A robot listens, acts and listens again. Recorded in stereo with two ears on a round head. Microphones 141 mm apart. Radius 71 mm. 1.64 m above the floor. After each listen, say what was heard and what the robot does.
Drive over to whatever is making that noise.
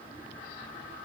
Keep listening.
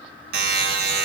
The buzzer: about 65° right or 115° right. Turn 65° right.
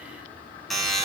Drive 1.0 m forward.
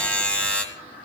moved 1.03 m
The buzzer is now 10° left. Turn 10° left.
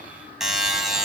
Drive 1.0 m forward.
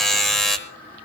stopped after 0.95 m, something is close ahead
I am next to the buzzer.